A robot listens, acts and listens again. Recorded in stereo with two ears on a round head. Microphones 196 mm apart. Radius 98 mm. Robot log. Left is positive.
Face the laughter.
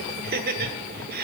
note: The laughter: about 45° right or 135° right.
cmd yaw -45
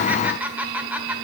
note: So it is at 10° right.
cmd yaw -10
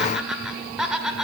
end: Found it: laughter, straight ahead.